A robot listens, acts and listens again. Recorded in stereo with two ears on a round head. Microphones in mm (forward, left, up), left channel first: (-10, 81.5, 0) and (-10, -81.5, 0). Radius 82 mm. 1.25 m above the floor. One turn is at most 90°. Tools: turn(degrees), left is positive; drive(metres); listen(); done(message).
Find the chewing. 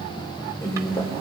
turn(degrees=15)
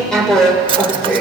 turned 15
done("Found it: chewing, straight ahead, 2 to 4 m away.")